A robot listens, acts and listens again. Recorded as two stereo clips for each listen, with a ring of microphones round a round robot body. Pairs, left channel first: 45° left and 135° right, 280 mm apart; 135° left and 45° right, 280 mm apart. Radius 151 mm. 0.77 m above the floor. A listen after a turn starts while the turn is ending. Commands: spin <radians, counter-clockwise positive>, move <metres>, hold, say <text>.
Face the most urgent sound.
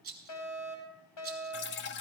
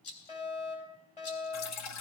spin 1.13
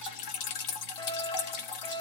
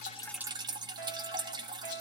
say Facing the fire alarm, over 4 m away.